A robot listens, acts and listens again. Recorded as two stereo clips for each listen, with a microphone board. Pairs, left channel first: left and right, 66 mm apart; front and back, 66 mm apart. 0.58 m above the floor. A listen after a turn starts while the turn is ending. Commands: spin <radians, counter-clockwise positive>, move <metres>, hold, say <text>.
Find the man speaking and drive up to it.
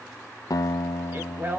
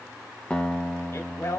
spin -0.61
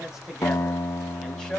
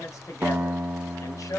spin 0.17
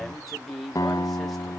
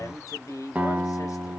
move 1.0
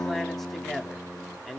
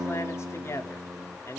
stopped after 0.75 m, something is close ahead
say I am next to the man speaking.